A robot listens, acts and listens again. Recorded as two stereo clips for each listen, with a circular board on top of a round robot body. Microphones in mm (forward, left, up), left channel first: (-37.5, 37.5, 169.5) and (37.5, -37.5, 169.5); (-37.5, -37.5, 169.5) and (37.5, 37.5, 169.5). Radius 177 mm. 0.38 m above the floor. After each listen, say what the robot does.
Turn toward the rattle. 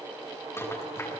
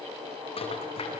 Turn 160° right.
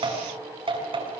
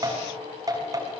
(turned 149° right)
Turn 10° right.
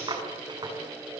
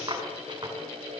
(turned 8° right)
Found it: a rattle, straight ahead.